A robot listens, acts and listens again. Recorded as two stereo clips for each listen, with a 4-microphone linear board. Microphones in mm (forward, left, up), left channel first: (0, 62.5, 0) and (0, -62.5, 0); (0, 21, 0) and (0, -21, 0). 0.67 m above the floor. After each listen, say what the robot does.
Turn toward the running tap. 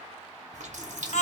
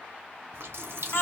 Turn 70° right.
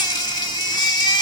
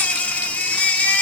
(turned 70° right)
Keep listening.
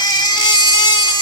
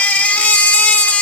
Keep listening.
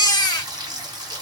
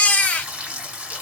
Turn 35° right.
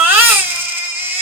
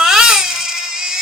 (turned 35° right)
Keep listening.
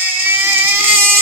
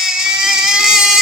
Keep listening.
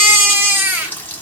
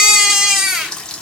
Turn 15° left.
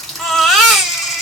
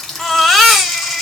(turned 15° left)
Facing the running tap.